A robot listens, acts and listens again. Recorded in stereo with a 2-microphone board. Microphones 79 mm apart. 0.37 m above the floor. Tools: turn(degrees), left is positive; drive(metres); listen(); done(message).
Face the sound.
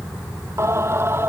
turn(degrees=-30)
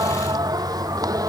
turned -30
turn(degrees=-130)
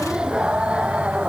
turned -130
turn(degrees=-15)
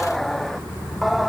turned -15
done("Found it: singing, straight ahead.")